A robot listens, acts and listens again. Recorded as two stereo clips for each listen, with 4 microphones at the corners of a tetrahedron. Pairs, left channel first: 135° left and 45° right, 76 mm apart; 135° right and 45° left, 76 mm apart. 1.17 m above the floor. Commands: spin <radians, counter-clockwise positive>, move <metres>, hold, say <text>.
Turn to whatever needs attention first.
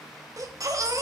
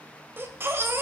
spin -0.17
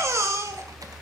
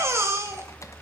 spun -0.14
say Found it: a baby crying, straight ahead.